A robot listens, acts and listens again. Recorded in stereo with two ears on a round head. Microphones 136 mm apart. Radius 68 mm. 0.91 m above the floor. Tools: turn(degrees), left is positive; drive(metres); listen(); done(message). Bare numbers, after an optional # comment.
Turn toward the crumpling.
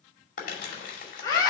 # The crumpling: about 55° left or 125° left.
turn(55)
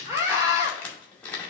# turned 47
# So it is at 10° left.
turn(10)
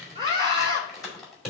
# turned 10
done("Found it: crumpling, straight ahead.")